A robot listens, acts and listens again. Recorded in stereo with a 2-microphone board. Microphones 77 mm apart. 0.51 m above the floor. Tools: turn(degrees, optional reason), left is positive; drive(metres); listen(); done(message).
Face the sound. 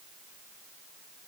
listen()
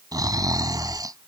turn(degrees=-55, reason="The snoring: about 55° right or 125° right.")
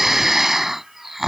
done("Facing the snoring.")